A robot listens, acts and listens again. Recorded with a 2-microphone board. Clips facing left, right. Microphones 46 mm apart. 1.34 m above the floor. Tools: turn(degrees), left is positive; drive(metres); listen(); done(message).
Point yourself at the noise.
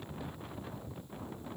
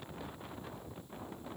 listen()
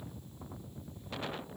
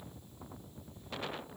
listen()
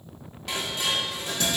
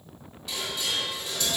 turn(degrees=70)
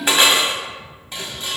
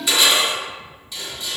turn(degrees=40)
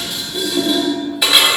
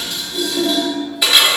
done("Facing the dishes clattering, 2 to 4 m away.")